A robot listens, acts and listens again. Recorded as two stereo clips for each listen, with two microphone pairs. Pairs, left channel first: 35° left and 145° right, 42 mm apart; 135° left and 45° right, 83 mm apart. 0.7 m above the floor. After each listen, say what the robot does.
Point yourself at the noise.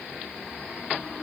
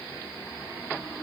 Keep listening.
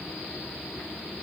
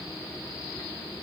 Keep listening.
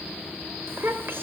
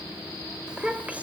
Turn 120° right.
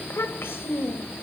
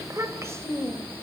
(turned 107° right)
Turn 15° left.
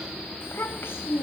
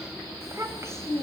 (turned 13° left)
Turn 10° left.
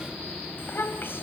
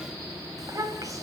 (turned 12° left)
Found it: a child speaking, straight ahead.